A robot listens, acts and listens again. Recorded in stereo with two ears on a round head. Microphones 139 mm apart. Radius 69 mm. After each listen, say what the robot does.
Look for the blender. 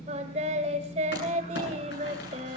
Keep listening.
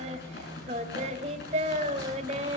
Keep listening.
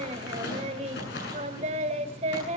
I can't make out a blender, only singing and crumpling.